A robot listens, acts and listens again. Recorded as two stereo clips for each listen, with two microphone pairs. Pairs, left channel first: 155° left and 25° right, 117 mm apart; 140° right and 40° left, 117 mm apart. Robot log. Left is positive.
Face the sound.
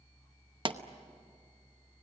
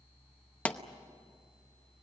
note: The pop: 60° right.
cmd yaw -60
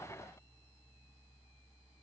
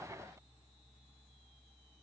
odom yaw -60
end: I heard a pop from this way, but can't make it out now.